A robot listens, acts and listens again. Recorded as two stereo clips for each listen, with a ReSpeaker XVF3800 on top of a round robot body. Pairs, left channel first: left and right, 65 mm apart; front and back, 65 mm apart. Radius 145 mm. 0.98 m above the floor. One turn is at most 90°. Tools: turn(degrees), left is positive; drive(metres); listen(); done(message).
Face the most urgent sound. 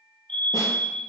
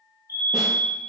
turn(degrees=15)
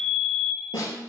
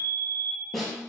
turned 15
done("Facing the fire alarm.")